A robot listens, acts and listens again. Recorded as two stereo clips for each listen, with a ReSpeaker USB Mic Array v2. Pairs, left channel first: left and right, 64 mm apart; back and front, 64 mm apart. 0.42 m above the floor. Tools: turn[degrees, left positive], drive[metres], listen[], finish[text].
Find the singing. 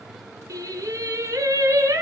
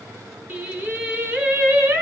Thought: The singing: 55° right.
Action: turn[-55]
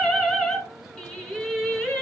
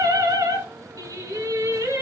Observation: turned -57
Thought: The singing is now 20° left.
Action: turn[20]
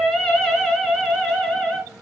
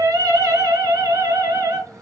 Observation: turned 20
Thought: The singing is now 10° left.
Action: turn[10]
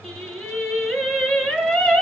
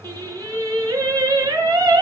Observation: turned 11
Action: finish[Facing the singing.]